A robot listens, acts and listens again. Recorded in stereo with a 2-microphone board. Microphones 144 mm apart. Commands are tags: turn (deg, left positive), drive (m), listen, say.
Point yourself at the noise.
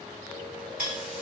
<turn deg="-90"/>
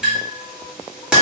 <say>Found it: a clink, straight ahead, 1 to 2 m away.</say>